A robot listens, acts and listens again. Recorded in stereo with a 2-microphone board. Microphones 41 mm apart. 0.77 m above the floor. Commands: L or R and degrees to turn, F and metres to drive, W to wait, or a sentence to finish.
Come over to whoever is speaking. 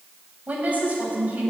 R40
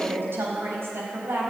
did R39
R100
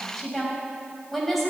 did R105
F1.0
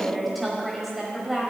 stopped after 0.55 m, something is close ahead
Blocked. The woman speaking is further on, straight ahead.